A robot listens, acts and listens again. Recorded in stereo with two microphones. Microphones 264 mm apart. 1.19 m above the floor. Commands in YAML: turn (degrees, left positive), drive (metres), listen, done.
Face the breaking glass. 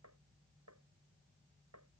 listen: true
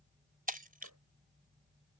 turn: -35
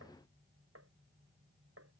listen: true
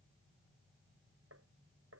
done: "I heard breaking glass, but can't make it out now. It was about straight ahead or 110° right."